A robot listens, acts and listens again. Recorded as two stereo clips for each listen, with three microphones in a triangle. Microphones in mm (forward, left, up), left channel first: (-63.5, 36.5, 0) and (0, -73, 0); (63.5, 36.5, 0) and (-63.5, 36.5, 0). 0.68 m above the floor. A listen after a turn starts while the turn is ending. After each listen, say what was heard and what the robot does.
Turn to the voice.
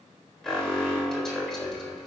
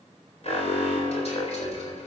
Keep listening.
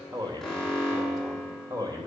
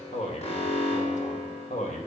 Facing the man speaking, 2 to 4 m away.